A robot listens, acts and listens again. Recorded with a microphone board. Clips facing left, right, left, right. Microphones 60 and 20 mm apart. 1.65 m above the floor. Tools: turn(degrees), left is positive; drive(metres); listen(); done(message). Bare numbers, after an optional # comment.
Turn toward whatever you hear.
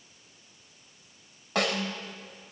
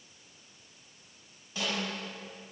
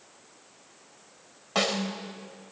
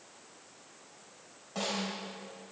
# The snare drum: about 65° left or 115° left.
turn(65)
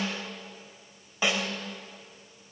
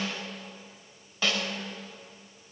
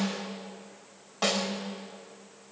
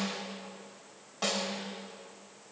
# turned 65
# So it is at 20° left.
turn(20)
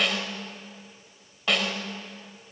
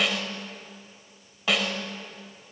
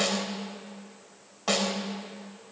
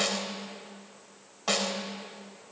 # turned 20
done("Found it: a snare drum, straight ahead.")